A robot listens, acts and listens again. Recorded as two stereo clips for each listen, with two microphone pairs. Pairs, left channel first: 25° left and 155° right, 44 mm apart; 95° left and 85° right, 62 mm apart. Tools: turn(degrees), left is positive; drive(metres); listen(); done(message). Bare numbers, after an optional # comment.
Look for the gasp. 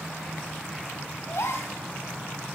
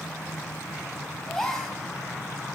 # The gasp: 10° left.
turn(10)
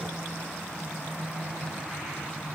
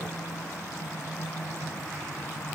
done("Facing where the gasp came from. I can't hear it now.")